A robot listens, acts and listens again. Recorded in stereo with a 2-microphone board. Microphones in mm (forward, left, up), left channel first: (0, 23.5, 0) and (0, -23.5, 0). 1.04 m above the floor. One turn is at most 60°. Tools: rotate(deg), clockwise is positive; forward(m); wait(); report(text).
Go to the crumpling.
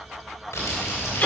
rotate(-60)
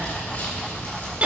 rotate(-45)
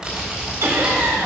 rotate(15)
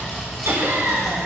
forward(1.0)
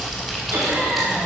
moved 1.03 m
forward(1.0)
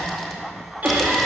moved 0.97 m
wait()
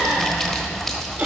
rotate(-15)
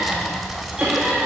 forward(1.0)
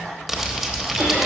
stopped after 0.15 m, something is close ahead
report("Arrived at the crumpling, straight ahead.")